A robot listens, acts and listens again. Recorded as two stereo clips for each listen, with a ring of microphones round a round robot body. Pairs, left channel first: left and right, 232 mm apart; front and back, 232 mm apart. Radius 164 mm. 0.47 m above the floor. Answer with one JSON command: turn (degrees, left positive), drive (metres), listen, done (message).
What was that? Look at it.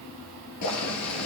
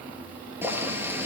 {"turn": 100}
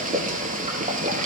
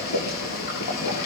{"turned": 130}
{"turn": -35}
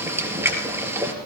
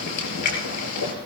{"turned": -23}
{"turn": -10}
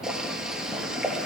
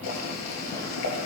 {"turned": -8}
{"done": "Facing the boiling, over 4 m away."}